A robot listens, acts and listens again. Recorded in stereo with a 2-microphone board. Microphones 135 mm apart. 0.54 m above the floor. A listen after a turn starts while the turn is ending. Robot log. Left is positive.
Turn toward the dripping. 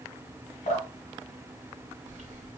note: The dripping: about 65° left or 115° left.
cmd yaw +65
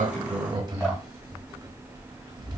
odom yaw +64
cmd idle
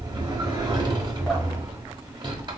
cmd idle
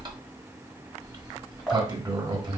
end: I heard dripping, but can't make it out now. It was about straight ahead or 50° left.